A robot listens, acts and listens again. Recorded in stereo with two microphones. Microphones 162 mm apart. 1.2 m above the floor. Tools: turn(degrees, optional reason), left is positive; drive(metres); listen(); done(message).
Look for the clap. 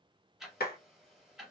turn(degrees=90)
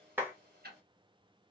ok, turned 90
turn(degrees=-10, reason="So it is at 10° right.")
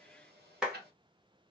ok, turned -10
done("Found it: a clap, straight ahead, 1 to 2 m away.")